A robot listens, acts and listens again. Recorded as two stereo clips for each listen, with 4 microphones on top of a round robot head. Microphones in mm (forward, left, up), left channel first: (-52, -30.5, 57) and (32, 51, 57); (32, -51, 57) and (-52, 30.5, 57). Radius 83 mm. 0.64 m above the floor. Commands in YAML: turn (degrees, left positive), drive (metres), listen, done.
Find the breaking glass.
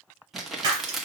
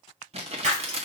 turn: 100
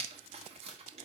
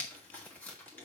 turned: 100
done: "I heard breaking glass from this way, but can't make it out now."